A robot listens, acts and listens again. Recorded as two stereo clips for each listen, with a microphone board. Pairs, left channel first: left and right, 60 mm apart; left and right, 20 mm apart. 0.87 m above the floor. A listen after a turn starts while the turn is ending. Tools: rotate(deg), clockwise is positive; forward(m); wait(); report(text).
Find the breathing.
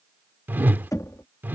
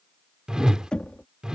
wait()
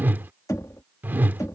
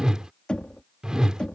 wait()
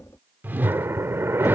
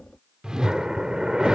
rotate(50)
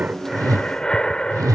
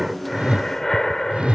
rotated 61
rotate(-15)
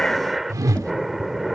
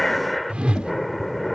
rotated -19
report("Facing the breathing.")